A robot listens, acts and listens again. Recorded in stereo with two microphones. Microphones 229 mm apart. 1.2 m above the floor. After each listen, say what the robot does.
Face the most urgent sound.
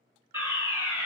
Turn 30° right.
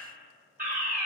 Turn 135° right.
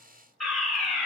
Found it: a fire alarm, straight ahead.